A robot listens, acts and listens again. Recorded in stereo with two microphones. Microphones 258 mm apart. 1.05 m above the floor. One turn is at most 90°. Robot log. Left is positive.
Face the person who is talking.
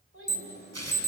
note: The child speaking: about 55° right or 125° right.
cmd yaw -55
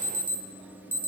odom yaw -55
cmd idle
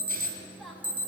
end: Facing the child speaking.